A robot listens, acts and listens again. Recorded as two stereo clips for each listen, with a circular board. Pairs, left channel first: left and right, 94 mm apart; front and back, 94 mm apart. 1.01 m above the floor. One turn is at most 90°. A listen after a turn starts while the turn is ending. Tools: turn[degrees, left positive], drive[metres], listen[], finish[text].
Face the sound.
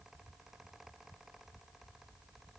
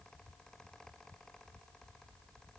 Action: listen[]
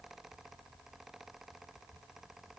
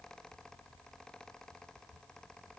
Action: listen[]
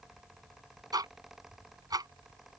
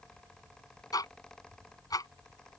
Thought: The ticking: 45° right.
Action: turn[-45]
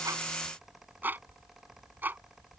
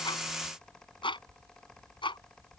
Thought: The ticking is now 20° right.
Action: turn[-20]
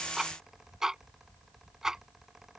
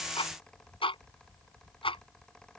Action: finish[Found it: ticking, straight ahead.]